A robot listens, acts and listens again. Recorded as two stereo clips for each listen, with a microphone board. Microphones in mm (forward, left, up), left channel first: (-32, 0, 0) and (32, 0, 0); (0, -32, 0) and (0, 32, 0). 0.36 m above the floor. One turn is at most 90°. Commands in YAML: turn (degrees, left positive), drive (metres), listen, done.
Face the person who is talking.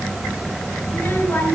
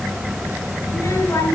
turn: -90
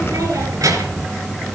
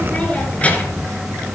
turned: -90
turn: -20
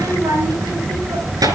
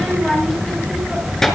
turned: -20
done: "Found it: a child speaking, straight ahead, over 4 m away."